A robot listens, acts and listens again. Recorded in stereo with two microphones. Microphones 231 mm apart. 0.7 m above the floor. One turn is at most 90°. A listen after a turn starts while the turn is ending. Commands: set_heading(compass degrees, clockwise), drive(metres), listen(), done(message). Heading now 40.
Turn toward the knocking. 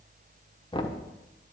set_heading(20)
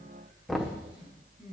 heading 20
done("Facing the knocking, 1 to 2 m away.")